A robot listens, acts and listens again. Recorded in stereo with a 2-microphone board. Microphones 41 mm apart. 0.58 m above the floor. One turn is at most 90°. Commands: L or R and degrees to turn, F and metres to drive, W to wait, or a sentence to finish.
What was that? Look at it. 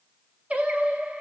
R35
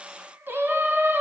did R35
R90
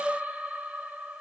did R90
R35
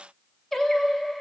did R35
L10
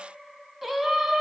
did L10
Facing the singing, under 1 m away.